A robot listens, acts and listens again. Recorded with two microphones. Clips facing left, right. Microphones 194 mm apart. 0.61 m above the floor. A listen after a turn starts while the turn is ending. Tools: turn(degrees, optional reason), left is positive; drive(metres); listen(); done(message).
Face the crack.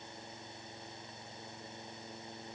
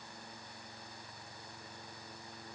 listen()
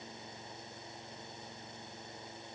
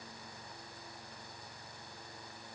listen()
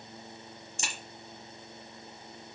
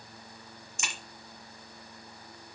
turn(degrees=35, reason="The crack: about 35° left or 145° left.")
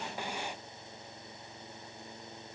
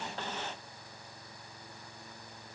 listen()
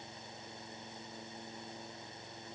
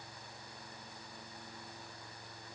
done("I heard a crack, but can't make it out now. It was about straight ahead or 110° left.")